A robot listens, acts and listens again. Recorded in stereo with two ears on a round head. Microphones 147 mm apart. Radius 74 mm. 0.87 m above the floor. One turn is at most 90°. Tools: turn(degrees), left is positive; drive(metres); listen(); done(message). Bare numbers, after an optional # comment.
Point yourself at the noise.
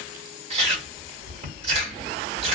# The chewing: about 40° right or 140° right.
turn(-40)
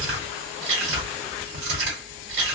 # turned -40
# So it is at 95° right.
turn(-90)
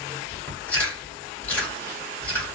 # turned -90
# The chewing is now 10° left.
turn(10)
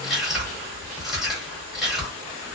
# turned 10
done("Facing the chewing, 1 to 2 m away.")